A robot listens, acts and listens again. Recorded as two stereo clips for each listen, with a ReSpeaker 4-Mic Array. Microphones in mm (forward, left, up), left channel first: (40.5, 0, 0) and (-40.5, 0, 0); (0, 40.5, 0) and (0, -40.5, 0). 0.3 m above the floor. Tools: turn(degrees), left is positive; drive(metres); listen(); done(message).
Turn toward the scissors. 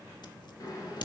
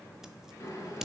done("Facing the scissors.")